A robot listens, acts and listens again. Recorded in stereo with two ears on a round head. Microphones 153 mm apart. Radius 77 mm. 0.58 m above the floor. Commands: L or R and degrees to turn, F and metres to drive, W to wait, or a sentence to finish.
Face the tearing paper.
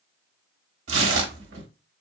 R90
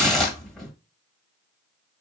Found it: tearing paper, straight ahead, 1 to 2 m away.